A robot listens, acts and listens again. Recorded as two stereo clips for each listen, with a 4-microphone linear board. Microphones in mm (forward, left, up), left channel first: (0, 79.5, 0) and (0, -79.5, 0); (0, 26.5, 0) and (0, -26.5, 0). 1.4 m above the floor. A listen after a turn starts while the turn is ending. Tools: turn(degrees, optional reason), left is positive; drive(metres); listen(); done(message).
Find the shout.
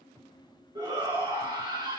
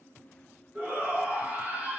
turn(degrees=-25, reason="The shout: about 25° right or 155° right.")
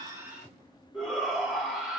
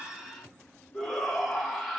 done("Found it: a shout, straight ahead.")